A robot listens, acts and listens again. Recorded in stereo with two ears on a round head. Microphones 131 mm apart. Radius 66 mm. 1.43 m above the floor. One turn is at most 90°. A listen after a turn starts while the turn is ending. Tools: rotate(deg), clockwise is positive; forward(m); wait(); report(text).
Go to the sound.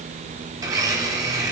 rotate(25)
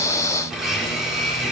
forward(1.0)
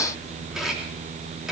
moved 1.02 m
forward(1.0)
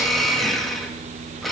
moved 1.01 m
forward(1.0)
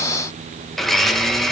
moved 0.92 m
forward(1.0)
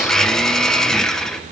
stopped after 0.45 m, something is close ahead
report("Arrived at the blender, straight ahead.")